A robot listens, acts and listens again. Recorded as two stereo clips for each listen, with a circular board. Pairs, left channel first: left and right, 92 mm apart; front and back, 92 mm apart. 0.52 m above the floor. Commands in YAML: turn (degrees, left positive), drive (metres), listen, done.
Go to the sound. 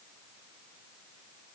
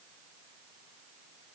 listen: true
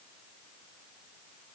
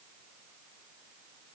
listen: true
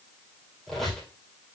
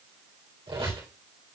turn: 175
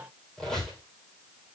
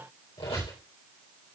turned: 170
drive: 1.0
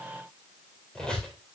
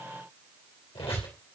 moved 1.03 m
turn: 10
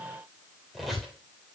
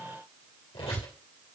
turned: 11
drive: 1.0
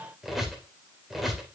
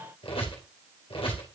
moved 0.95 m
drive: 1.0
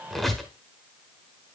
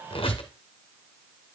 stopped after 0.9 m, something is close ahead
done: "Arrived at the squeak, straight ahead."